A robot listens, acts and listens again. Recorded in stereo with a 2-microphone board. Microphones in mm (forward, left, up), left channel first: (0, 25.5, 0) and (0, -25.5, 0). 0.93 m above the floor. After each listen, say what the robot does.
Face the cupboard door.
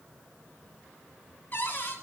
Turn 35° left.
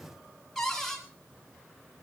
Facing the cupboard door.